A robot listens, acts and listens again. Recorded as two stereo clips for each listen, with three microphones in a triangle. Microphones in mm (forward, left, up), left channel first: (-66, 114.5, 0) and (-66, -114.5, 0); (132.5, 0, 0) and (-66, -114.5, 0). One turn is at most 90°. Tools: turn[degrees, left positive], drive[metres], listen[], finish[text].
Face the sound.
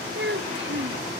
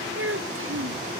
Thought: The child speaking: 130° right.
Action: turn[-90]
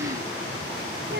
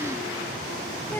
Thought: The child speaking is now 50° right.
Action: turn[-50]
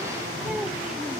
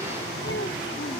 Action: listen[]
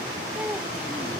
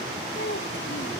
Action: finish[Facing the child speaking.]